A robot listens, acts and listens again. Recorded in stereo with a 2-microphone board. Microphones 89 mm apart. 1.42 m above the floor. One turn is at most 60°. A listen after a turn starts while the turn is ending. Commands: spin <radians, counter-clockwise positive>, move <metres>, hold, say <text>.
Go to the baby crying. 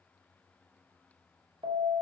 hold
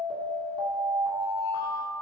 hold
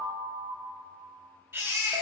spin -0.44
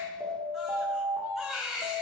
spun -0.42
move 1.0
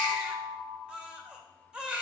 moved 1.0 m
spin -0.17
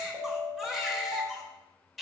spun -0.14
move 1.0
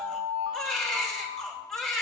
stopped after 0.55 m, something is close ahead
spin 0.17
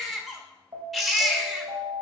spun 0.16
say I am next to the baby crying.